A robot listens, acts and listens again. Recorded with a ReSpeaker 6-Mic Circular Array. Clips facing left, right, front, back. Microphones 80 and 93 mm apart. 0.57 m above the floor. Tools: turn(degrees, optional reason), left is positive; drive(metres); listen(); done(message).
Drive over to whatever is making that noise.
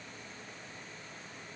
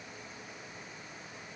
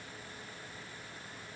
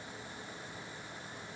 listen()
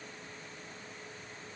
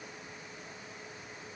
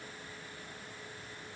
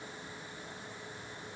listen()
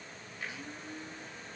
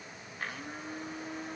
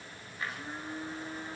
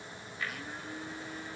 turn(degrees=-60, reason="The blender: 60° right.")
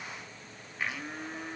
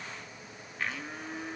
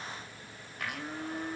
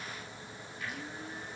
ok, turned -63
drive(metres=1.0)
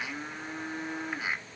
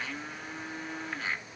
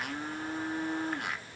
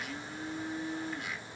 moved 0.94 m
turn(degrees=10, reason="The blender is now 10° left.")
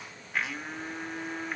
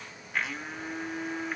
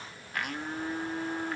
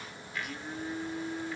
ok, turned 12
drive(metres=1.0)
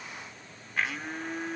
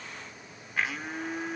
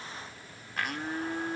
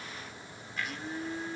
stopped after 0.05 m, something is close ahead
done("I am next to the blender.")